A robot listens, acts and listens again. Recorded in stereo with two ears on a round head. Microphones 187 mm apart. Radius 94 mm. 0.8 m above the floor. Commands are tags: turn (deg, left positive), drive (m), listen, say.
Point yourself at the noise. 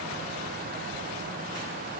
<listen/>
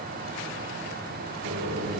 <turn deg="-90"/>
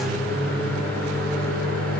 <say>Facing the microwave.</say>